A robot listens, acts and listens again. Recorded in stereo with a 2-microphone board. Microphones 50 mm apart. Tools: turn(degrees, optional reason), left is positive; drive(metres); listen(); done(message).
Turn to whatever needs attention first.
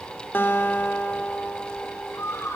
turn(degrees=90)
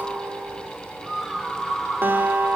done("Facing the scream.")